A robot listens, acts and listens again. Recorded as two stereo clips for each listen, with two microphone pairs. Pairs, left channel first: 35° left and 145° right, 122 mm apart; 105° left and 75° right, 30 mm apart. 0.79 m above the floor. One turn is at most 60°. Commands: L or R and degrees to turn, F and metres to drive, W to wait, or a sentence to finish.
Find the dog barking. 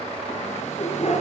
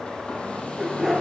L15
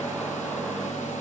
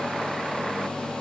W
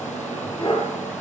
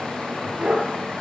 R10
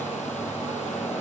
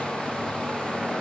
W
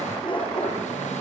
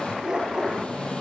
R10
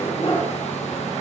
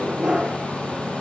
R10
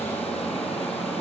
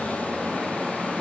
W
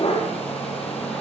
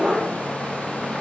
Facing the dog barking.